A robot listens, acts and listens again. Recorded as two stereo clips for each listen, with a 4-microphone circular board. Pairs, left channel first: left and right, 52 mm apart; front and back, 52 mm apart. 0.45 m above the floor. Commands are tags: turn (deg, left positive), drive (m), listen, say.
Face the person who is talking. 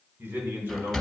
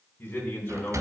<turn deg="-50"/>
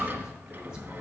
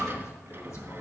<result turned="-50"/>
<listen/>
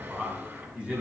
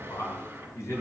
<turn deg="-25"/>
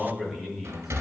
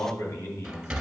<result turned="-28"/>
<turn deg="-10"/>
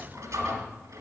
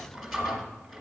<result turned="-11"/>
<listen/>
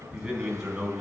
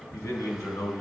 <turn deg="-15"/>
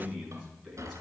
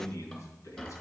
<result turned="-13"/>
<say>Facing the man speaking, 2 to 4 m away.</say>